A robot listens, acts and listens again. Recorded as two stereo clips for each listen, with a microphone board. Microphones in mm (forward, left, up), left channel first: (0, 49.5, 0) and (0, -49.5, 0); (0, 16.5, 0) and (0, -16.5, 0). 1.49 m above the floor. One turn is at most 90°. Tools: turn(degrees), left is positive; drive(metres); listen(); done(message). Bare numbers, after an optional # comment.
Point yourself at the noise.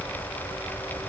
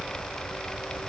listen()
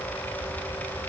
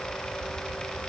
listen()
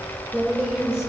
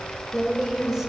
turn(-30)
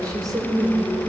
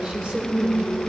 # So it is at 140° right.
turn(-90)
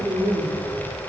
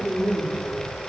# The woman speaking is now 70° right.
turn(-70)
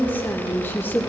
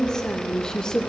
# The woman speaking is now 20° left.
turn(20)
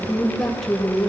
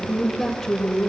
done("Found it: a woman speaking, straight ahead, 2 to 4 m away.")